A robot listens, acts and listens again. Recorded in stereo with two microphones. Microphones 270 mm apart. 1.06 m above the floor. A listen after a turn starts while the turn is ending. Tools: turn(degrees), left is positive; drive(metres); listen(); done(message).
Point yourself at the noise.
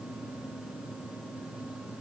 listen()
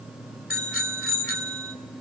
turn(degrees=50)
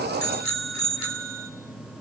turn(degrees=85)
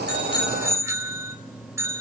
turn(degrees=-10)
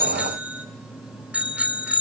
done("Found it: a bicycle bell, straight ahead.")